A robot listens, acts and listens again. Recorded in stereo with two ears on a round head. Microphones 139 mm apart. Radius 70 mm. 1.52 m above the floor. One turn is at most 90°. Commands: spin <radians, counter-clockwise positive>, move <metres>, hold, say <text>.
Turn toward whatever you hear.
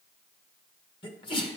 spin 0.61
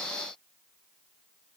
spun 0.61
hold
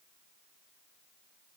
say I heard a sneeze, but can't make it out now. It was about straight ahead or 110° left.